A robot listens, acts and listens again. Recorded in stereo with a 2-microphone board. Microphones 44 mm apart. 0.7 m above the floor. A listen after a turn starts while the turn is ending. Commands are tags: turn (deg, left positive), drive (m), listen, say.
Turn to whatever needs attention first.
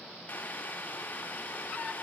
<listen/>
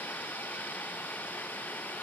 <listen/>
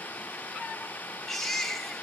<turn deg="30"/>
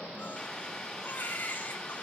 <turn deg="145"/>
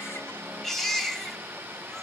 <say>Facing the baby crying, 2 to 4 m away.</say>